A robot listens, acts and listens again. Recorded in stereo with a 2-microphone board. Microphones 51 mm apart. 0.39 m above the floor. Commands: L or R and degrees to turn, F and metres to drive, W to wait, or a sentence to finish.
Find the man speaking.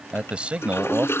R30
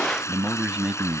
R25
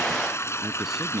Facing the man speaking.